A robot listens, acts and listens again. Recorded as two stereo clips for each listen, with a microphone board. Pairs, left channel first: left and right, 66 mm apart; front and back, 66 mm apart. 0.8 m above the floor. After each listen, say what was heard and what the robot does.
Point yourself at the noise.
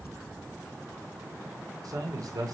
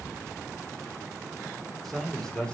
The man speaking: 75° right. Turn 75° right.
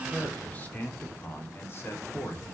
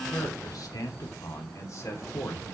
The man speaking is now 45° left. Turn 45° left.
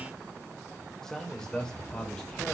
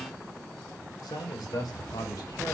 The man speaking is now 10° left. Turn 10° left.
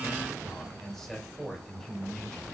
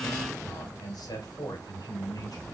Facing the man speaking.